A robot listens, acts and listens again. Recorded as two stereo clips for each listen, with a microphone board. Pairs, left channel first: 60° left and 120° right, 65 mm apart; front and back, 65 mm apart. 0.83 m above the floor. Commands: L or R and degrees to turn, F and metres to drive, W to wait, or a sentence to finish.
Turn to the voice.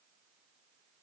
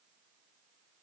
W
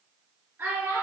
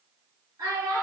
R170
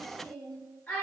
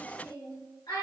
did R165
Facing the child speaking.